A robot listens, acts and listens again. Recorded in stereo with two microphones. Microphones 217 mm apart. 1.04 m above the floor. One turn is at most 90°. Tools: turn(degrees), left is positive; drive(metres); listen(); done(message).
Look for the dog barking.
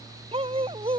turn(degrees=-25)
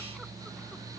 listen()
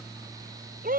turn(degrees=-90)
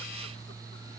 turn(degrees=-50)
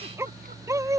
turn(degrees=-15)
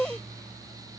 done("Found it: a dog barking, straight ahead.")